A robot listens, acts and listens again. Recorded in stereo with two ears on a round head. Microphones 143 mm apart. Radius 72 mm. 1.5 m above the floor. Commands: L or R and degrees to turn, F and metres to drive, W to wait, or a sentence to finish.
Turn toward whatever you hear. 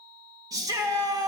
R25
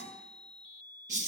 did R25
R130
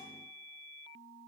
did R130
W
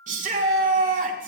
R50
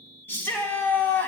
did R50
L10
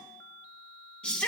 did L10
Found it: a shout, straight ahead, 2 to 4 m away.